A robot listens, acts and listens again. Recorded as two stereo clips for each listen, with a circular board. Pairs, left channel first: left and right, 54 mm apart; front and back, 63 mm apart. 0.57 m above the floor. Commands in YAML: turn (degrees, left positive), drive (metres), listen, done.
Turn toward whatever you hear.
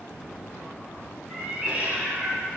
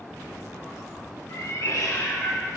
turn: -35
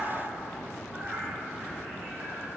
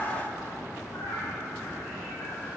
turn: -10
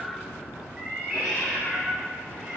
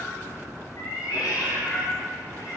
turn: -15
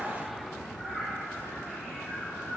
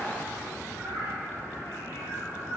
done: "Facing the cat meowing, over 4 m away."